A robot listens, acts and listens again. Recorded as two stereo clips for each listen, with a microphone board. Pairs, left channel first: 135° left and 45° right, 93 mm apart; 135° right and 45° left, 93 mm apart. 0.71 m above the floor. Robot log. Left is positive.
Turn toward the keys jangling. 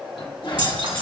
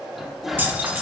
note: The keys jangling: 25° right.
cmd yaw -25
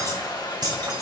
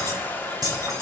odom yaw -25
end: Facing the keys jangling, over 4 m away.